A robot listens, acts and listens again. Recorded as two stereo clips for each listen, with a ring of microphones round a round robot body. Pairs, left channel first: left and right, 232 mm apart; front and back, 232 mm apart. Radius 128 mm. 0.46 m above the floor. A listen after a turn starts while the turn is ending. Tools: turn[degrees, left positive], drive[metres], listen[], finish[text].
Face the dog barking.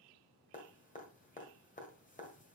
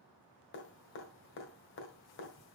Action: listen[]
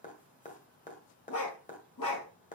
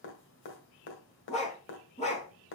Thought: The dog barking: 65° left.
Action: turn[65]
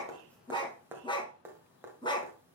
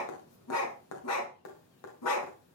Thought: The dog barking is now 15° left.
Action: turn[15]
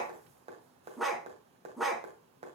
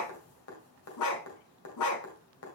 Action: finish[Facing the dog barking.]